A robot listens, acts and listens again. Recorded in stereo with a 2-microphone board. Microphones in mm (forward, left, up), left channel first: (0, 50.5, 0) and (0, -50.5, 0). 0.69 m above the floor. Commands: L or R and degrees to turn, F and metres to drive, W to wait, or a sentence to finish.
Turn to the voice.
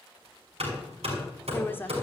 L20
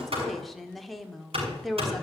Found it: a woman speaking, straight ahead.